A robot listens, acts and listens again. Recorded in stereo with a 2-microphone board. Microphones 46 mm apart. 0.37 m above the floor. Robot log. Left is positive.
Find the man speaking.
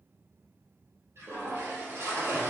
cmd idle
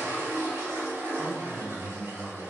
note: The man speaking: about 35° right or 145° right.
cmd yaw -35
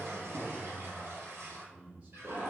note: The man speaking: about 30° right or 150° right.
cmd yaw -30
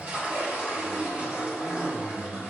cmd idle
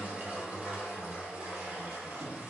cmd idle
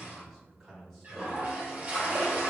end: Found it: a man speaking, straight ahead, 2 to 4 m away.